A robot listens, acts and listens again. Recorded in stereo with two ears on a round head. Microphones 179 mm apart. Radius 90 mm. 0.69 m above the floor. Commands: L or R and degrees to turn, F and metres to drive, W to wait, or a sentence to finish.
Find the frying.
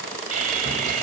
W
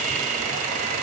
W
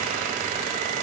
I can't make out frying, only sawing.